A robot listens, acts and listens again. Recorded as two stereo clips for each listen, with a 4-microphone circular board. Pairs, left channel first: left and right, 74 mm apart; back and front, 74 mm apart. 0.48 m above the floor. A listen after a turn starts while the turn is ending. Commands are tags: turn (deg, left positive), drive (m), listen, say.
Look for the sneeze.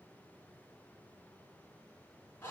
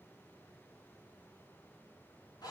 <listen/>
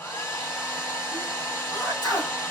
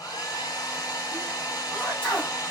<turn deg="110"/>
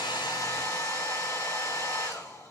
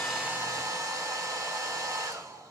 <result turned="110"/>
<say>I heard a sneeze from this way, but can't make it out now.</say>